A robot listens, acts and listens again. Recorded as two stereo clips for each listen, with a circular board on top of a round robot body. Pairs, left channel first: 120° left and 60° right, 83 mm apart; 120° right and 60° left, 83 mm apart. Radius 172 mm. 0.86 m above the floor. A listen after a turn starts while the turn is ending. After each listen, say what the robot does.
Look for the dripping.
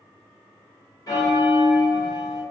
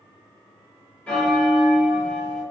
Keep listening.
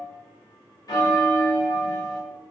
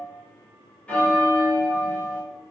Keep listening.
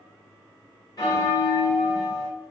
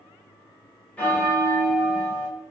I can't make out dripping to turn to.